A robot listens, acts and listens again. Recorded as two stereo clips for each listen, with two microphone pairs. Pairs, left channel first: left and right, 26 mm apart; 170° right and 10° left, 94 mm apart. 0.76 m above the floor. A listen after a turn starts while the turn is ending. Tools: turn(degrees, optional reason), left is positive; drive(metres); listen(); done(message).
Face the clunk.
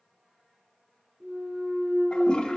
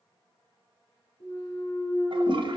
turn(degrees=-125, reason="The clunk: 125° right.")
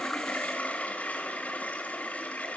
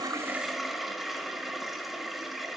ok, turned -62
turn(degrees=-60, reason="Nothing new. It was at 60° right.")
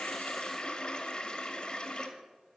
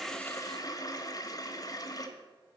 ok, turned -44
turn(degrees=-20, reason="Nothing new. It was at 20° right.")
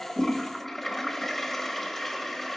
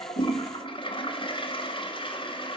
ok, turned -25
done("I heard a clunk from this way, but can't make it out now.")